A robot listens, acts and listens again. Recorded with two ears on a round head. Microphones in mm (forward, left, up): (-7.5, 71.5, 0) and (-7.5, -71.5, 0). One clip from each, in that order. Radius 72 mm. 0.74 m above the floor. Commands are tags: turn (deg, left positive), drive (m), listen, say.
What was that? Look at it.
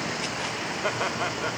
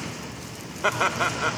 <turn deg="-25"/>
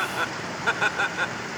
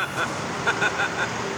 <turn deg="10"/>
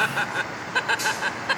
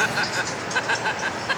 <turn deg="15"/>
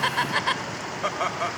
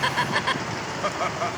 <turn deg="15"/>
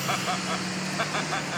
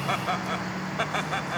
<say>Found it: laughter, straight ahead.</say>